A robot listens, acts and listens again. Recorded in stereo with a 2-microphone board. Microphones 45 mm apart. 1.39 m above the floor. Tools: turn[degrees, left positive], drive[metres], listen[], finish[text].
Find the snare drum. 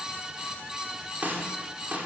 Thought: The snare drum: about 40° right or 140° right.
Action: turn[-40]
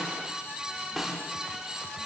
Action: finish[Found it: a snare drum, straight ahead, over 4 m away.]